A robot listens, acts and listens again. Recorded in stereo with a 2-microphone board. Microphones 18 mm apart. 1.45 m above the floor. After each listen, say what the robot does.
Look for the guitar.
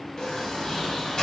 Keep listening.
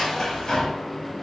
Keep listening.
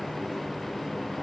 I can't make out a guitar to turn to.